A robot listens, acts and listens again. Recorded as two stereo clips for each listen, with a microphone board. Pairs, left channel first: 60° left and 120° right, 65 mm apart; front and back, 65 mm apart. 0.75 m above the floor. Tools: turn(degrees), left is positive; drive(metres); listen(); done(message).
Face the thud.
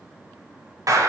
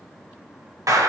listen()
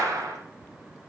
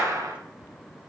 listen()
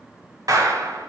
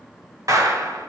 done("I can't make out a thud, only a clap.")